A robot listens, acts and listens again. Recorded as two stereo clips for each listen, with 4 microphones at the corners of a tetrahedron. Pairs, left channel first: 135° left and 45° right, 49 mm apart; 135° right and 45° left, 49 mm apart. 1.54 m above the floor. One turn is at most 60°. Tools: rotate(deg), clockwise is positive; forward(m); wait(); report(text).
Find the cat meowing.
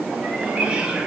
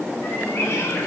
wait()
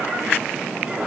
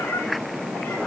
rotate(60)
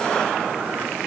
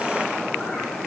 rotate(55)
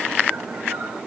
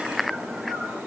wait()
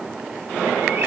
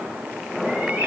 report("Facing where the cat meowing came from. I can't hear it now.")